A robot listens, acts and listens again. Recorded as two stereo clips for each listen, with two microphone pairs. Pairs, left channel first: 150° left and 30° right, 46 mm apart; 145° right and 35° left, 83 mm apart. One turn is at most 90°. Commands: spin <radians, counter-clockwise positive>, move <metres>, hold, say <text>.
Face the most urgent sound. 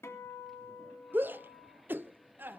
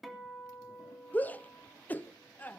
spin -1.31
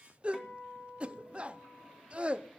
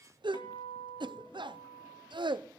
spin 0.61
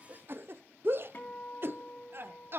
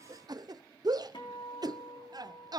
say Facing the shout.